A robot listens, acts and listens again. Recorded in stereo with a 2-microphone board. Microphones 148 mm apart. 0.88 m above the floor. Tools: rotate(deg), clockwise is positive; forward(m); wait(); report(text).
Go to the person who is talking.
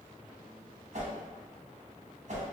wait()
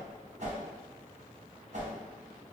wait()
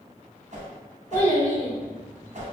rotate(-15)
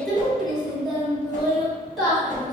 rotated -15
forward(1.0)
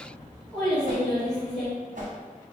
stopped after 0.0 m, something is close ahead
report("Something is in my way. I am facing the child speaking but have not reached it.")